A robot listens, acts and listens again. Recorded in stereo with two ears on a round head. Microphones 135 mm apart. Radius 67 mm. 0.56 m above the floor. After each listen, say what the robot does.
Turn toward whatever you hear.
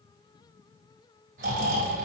Turn 60° right.
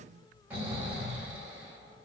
Turn 15° right.
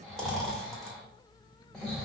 Found it: snoring, straight ahead.